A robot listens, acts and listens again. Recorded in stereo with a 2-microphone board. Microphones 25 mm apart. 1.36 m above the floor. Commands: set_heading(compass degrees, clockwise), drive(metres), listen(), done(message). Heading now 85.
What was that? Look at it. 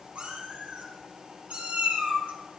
set_heading(150)
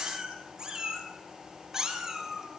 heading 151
set_heading(171)
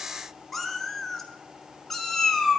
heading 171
set_heading(156)
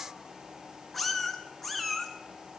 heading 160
done("Facing the cat meowing.")